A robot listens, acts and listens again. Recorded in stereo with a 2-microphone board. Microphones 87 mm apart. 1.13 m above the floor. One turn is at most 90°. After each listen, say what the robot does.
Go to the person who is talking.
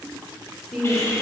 Turn 30° left.
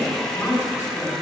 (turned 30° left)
Turn 90° left.
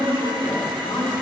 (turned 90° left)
Turn 65° left.
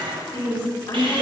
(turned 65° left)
Turn 40° left.
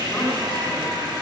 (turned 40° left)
Keep listening.
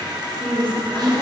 Turn 20° left.
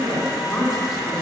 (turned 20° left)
Drive 1.0 m forward.
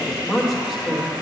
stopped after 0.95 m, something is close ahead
Arrived at the woman speaking, straight ahead.